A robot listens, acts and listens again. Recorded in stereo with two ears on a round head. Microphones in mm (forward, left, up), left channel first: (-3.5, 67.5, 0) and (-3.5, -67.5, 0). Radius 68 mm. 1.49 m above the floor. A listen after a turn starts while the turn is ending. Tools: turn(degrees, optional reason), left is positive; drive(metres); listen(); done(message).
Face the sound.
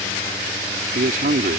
turn(degrees=-60, reason="The man speaking: about 60° right or 120° right.")
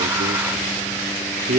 turn(degrees=-65, reason="So it is at 65° right.")
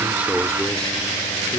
listen()
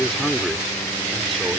listen()
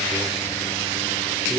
done("Facing where the man speaking came from. I can't hear it now.")